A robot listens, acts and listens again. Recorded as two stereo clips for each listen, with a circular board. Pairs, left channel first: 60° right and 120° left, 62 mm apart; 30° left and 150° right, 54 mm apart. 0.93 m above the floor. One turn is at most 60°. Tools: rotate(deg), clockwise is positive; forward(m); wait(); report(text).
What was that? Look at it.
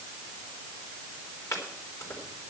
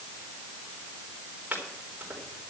rotate(60)
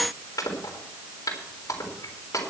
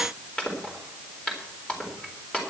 rotate(40)
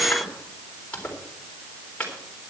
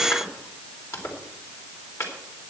rotate(-10)
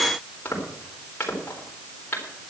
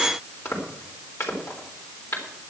report("Facing the chopping.")